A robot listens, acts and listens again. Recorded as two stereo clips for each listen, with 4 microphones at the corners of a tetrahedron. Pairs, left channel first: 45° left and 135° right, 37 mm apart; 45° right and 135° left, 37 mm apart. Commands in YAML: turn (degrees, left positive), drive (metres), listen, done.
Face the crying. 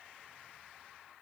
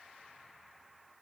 listen: true
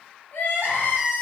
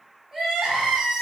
turn: 55
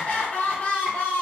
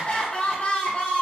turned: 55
turn: 10
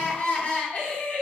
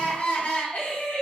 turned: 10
done: "Facing the crying, 1 to 2 m away."